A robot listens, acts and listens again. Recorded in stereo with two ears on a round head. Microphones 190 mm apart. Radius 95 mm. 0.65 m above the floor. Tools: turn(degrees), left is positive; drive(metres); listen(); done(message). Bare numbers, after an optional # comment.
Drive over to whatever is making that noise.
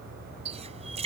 # The running tap: about 30° right or 150° right.
turn(-30)
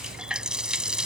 drive(1.0)
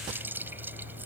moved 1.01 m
# The running tap is now 10° right.
turn(-10)
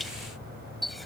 drive(1.0)
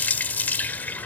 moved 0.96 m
# The running tap is now 10° left.
turn(10)
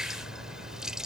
drive(1.0)
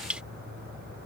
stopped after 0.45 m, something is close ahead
done("I am next to the running tap.")